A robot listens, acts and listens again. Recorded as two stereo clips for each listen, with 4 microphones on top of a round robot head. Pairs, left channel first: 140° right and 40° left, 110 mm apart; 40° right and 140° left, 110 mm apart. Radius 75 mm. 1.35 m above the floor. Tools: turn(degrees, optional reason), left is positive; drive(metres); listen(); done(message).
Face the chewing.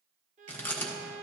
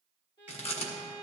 turn(degrees=-70, reason="The chewing: 70° right.")
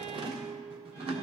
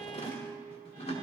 done("Found it: chewing, straight ahead, 1 to 2 m away.")